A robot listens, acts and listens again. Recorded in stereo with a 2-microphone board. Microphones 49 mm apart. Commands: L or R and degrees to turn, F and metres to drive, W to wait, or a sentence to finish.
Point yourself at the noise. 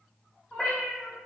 L30
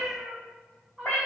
L155
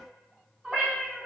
Facing the cat meowing.